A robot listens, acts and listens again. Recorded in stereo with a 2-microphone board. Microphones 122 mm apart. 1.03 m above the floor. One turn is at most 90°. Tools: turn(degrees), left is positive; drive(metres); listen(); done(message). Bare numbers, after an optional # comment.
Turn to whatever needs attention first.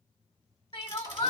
# The crying: about 40° left or 140° left.
turn(40)
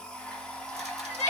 # So it is at 95° left.
turn(90)
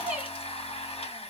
# The crying is now 15° right.
turn(-15)
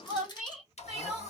done("Facing the crying.")